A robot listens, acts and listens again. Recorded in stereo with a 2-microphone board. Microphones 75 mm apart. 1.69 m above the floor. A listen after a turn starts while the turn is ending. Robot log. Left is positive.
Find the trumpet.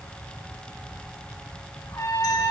note: The trumpet: about 45° left or 135° left.
cmd yaw +45
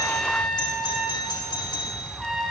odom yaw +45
end: Found it: a trumpet, straight ahead.